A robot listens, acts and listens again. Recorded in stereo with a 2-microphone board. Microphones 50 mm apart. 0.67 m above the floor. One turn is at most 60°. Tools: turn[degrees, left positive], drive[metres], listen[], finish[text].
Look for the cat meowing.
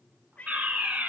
Thought: The cat meowing: about 30° left or 150° left.
Action: turn[30]
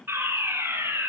Action: listen[]
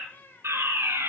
Thought: So it is at 135° left.
Action: turn[60]
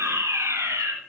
Thought: Nothing new. It was at 75° left.
Action: turn[60]
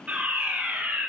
Thought: Nothing new. It was at 15° left.
Action: turn[15]
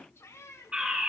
Thought: The cat meowing is now 75° left.
Action: turn[60]
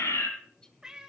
Thought: The cat meowing is now 15° right.
Action: turn[-15]
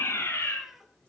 Action: finish[Facing the cat meowing, 1 to 2 m away.]